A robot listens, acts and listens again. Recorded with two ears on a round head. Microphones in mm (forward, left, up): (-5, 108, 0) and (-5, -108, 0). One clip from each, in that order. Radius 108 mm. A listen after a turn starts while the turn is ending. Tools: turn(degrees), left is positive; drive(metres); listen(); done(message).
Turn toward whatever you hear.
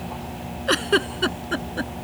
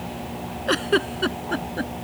turn(degrees=20)
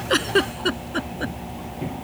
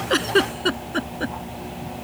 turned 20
done("Found it: a giggle, straight ahead.")